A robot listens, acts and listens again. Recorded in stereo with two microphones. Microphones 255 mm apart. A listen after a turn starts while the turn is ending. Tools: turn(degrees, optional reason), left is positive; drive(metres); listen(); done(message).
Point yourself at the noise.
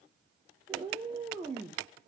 turn(degrees=-30)
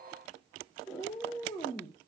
turn(degrees=15, reason="So it is at 15° left.")
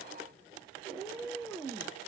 done("Found it: a cat meowing, straight ahead.")